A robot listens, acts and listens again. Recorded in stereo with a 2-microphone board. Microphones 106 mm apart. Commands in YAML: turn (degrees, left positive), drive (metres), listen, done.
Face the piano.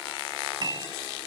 turn: -40
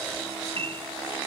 turn: -95
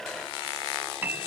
turn: -20
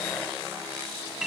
done: "Facing the piano."